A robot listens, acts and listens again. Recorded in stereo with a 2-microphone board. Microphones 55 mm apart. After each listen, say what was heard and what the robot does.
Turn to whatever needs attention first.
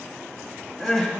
Turn 30° left.
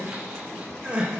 So it is at 25° right. Turn 25° right.
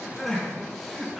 Facing the crying.